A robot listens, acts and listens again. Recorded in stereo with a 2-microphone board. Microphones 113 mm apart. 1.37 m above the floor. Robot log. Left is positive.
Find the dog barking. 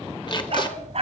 note: The dog barking: about 60° right or 120° right.
cmd yaw -60
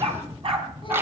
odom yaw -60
note: So it is at 50° right.
cmd yaw -50
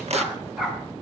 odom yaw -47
end: Facing the dog barking, over 4 m away.